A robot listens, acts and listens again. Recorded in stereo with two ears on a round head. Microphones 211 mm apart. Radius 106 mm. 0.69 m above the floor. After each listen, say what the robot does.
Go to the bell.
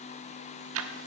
Keep listening.
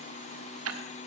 Keep listening.
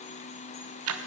I can't make out a bell, only ticking.